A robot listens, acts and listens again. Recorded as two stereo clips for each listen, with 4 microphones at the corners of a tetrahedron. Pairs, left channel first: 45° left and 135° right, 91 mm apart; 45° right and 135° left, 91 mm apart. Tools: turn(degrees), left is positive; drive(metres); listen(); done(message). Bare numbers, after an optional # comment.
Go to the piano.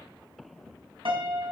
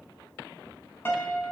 # The piano: 110° right.
turn(-110)
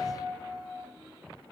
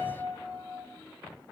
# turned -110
# The piano is now 15° right.
turn(-15)
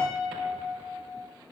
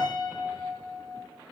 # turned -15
drive(1.0)
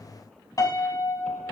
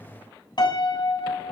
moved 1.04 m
drive(1.0)
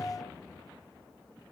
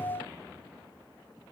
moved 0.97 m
listen()
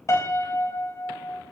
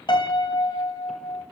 # The piano is now 10° right.
turn(-10)
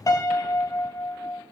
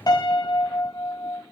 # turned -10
drive(1.0)
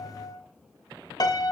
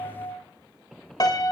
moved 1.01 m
drive(1.0)
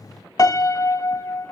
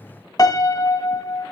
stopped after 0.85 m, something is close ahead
done("Arrived at the piano, straight ahead.")